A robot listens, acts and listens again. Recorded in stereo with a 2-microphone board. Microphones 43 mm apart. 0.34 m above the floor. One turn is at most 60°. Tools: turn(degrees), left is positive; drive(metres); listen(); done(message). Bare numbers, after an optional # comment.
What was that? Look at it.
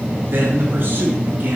# The man speaking: about 55° right or 125° right.
turn(-55)
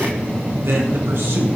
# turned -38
# So it is at 70° right.
turn(-60)
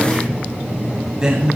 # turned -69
# The man speaking is now 20° right.
turn(-20)
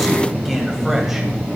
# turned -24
listen()
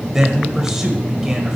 # The man speaking is now 15° right.
turn(-15)
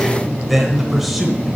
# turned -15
done("Facing the man speaking.")